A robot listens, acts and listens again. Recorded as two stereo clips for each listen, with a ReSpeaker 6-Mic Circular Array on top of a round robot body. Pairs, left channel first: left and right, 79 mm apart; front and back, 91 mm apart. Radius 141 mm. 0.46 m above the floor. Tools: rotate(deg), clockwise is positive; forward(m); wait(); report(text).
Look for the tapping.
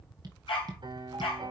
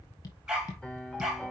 rotate(50)
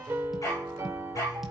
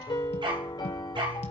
wait()
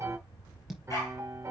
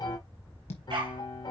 report("Found it: tapping, straight ahead.")